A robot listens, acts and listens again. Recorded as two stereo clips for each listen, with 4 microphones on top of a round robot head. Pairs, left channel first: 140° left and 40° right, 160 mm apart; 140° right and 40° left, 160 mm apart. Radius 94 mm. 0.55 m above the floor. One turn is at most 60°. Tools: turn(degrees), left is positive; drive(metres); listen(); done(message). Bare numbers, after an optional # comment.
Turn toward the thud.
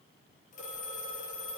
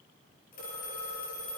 listen()
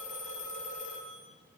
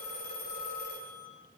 listen()
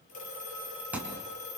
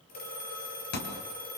# The thud: 120° right.
turn(-60)
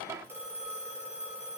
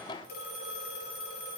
# Nothing new. It was at 60° right.
turn(-60)
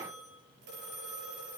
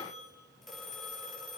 done("Facing where the thud came from. I can't hear it now.")